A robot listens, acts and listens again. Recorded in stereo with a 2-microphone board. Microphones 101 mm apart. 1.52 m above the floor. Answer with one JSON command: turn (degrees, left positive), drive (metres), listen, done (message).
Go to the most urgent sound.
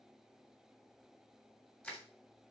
{"listen": true}
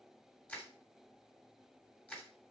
{"listen": true}
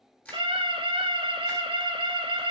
{"turn": -60}
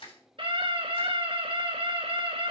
{"turn": -60}
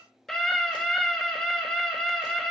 {"drive": 1.0}
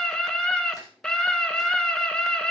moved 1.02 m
{"drive": 1.0}
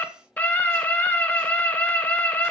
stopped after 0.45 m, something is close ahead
{"turn": 15}
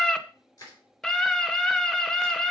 {"done": "Arrived at the scream, straight ahead."}